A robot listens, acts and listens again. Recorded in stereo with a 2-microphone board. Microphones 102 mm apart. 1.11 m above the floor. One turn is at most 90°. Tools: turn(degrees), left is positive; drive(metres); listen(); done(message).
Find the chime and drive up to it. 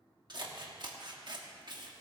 listen()
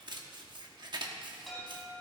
turn(degrees=30)
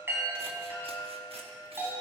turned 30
turn(degrees=-25)
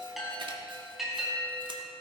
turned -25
drive(metres=1.0)
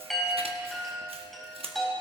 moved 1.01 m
drive(metres=1.0)
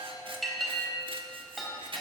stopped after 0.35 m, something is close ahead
done("Something is in my way. I am facing the chime but have not reached it.")